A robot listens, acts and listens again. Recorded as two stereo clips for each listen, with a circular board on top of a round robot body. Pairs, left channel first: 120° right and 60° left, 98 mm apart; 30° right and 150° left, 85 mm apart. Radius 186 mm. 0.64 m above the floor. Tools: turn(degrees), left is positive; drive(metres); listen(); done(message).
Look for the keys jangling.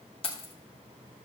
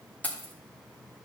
turn(degrees=-100)
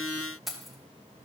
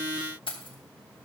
turn(degrees=-30)
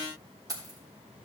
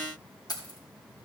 turn(degrees=10)
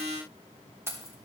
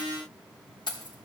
done("Facing the keys jangling.")